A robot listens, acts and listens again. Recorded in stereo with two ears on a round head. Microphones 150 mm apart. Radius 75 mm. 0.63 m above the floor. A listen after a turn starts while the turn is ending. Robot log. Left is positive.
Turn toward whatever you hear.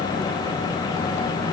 cmd idle
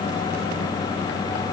cmd idle
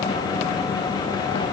end: I can't make out anything to turn to.